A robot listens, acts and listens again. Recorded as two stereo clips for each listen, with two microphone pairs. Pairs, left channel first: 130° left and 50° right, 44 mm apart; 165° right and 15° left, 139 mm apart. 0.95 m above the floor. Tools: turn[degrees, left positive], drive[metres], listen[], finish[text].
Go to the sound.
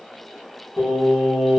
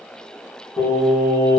Thought: The singing: 135° right.
Action: turn[-135]
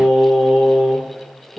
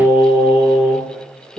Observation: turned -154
Thought: The singing is now 20° left.
Action: turn[20]
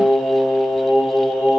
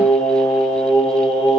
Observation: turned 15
Action: drive[1.0]
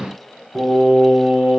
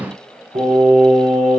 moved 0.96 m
Thought: The singing is now 15° left.
Action: turn[15]
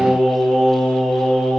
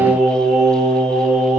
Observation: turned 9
Action: drive[1.0]
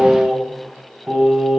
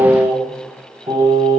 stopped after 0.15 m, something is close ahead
Thought: The singing is now 10° left.
Action: turn[10]
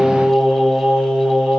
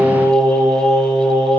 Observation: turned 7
Action: finish[Arrived at the singing, straight ahead.]